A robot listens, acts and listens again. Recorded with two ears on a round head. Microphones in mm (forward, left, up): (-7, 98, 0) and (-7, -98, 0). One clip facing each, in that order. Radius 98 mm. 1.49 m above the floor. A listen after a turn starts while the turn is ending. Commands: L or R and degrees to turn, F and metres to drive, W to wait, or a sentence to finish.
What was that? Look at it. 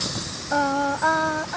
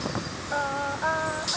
L60
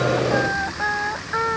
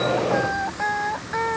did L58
L10
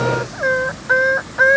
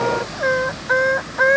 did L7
Found it: singing, straight ahead.